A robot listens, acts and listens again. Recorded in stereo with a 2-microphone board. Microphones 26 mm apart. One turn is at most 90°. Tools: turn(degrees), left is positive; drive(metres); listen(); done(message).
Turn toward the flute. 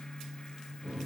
listen()
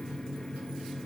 listen()
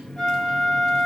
turn(degrees=20)
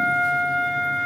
turn(degrees=90)
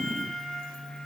turn(degrees=60)
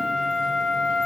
turn(degrees=-20)
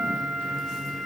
turn(degrees=-10)
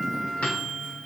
done("Facing the flute, 1 to 2 m away.")